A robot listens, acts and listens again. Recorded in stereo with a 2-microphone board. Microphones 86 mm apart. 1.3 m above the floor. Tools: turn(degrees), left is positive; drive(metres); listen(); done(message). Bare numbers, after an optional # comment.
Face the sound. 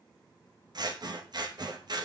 # The scissors: about 50° right or 130° right.
turn(-50)
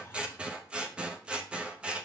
# So it is at 10° right.
turn(-10)
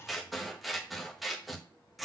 done("Facing the scissors.")